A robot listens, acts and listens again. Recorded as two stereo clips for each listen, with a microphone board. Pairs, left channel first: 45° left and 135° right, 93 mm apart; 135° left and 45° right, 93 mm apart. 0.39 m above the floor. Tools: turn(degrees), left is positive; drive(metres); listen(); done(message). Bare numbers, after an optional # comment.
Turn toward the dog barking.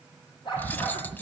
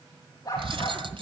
# The dog barking: 80° left.
turn(80)
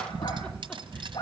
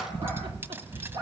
done("Facing the dog barking.")